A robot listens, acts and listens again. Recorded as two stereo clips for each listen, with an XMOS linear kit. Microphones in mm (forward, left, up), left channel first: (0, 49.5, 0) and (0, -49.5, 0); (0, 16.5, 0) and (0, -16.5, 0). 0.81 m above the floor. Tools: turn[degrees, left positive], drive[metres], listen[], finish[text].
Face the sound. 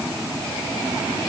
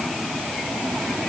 Action: listen[]
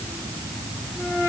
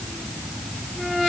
Action: listen[]
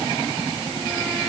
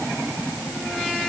Action: finish[I can't make out anything to turn to.]